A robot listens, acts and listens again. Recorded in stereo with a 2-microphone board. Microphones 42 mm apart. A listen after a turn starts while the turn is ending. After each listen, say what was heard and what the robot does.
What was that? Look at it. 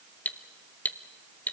The cutlery clinking: about 45° left or 135° left. Turn 45° left.
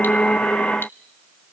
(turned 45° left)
Keep listening.
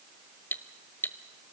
So it is at 85° left. Turn 85° left.
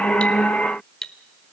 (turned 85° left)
The cutlery clinking is now 15° left. Turn 15° left.
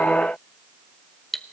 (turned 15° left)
Found it: cutlery clinking, straight ahead, under 1 m away.